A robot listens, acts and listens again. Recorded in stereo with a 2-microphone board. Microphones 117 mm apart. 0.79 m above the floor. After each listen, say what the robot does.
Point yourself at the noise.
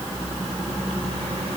Keep listening.
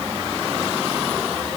Keep listening.
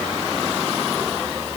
I can't make out anything to turn to.